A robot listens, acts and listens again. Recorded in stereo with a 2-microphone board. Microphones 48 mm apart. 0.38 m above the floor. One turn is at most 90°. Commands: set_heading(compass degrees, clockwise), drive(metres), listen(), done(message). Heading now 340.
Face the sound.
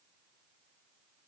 listen()
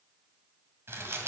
set_heading(40)
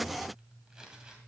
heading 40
set_heading(55)
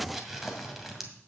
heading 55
done("Found it: crumpling, straight ahead, 2 to 4 m away.")